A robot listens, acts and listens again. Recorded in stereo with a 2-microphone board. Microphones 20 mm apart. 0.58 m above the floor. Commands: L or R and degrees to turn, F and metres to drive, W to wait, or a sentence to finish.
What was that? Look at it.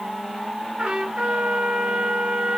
R90
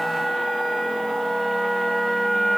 L10
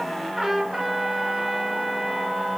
Found it: a trumpet, straight ahead.